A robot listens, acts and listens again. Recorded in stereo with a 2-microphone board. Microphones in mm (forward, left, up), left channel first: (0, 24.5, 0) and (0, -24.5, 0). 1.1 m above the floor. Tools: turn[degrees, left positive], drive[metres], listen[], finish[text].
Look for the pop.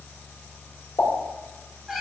Thought: The pop: about 70° left or 110° left.
Action: turn[70]
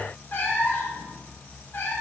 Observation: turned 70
Action: listen[]
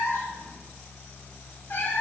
Action: finish[I heard a pop, but can't make it out now. It was about straight ahead or 40° left.]